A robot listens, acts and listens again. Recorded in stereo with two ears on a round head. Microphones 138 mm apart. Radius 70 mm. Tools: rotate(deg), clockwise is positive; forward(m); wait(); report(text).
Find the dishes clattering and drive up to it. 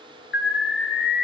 wait()
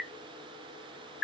wait()
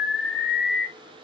report("I can't make out dishes clattering, only an alarm.")